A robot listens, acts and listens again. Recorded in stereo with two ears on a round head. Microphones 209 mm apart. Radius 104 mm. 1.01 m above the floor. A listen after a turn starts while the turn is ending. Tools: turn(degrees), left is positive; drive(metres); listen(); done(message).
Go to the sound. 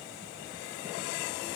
listen()
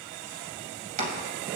turn(degrees=-35)
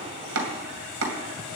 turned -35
turn(degrees=-110)
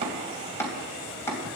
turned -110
turn(degrees=10)
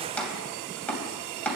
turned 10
drive(metres=1.0)
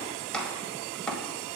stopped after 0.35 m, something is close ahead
done("Something is in my way. I am facing the chopping but have not reached it.")